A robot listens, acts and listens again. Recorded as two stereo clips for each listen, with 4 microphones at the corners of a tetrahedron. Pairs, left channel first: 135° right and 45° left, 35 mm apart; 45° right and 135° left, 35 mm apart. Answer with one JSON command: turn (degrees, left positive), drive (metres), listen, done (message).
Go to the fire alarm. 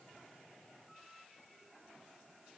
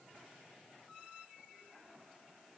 {"listen": true}
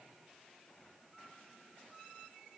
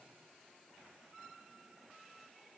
{"listen": true}
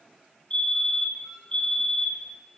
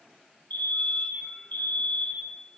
{"turn": -80}
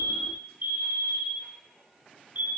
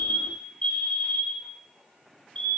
{"turn": 10}
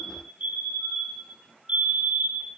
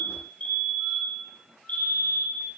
{"drive": 1.0}
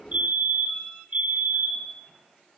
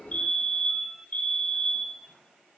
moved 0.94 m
{"drive": 1.0}
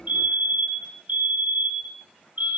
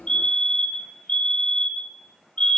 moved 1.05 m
{"turn": 10}
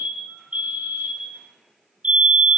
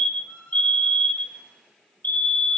{"drive": 1.0}
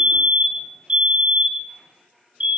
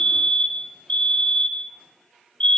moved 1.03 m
{"drive": 1.0}
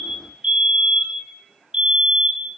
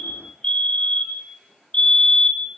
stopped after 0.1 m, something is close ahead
{"done": "Arrived at the fire alarm, straight ahead."}